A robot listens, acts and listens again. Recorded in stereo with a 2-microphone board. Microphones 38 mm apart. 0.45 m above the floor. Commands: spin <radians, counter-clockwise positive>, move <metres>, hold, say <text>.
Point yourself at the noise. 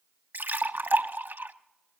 spin -1.31
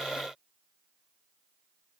hold
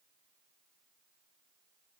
say I heard a splash, but can't make it out now. It was about straight ahead or 30° right.